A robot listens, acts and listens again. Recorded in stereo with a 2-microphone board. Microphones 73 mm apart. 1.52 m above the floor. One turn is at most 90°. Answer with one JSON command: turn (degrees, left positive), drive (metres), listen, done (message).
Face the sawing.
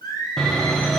{"turn": 30}
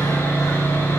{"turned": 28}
{"turn": 90}
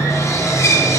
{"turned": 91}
{"turn": 50}
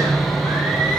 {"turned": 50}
{"done": "Found it: sawing, straight ahead."}